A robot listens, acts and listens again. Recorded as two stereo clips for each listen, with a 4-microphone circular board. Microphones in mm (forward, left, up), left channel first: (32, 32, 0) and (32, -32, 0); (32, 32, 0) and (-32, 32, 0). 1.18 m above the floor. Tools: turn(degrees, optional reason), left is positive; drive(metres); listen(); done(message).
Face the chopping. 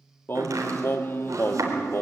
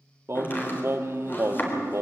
turn(degrees=-55, reason="The chopping: 55° right.")
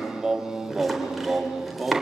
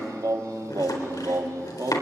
done("Facing the chopping.")